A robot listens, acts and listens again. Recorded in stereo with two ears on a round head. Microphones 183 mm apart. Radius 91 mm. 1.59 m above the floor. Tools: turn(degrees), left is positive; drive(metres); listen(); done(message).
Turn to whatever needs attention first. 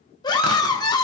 turn(degrees=20)
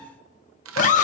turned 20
turn(degrees=140)
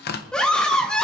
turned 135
done("Facing the scream, under 1 m away.")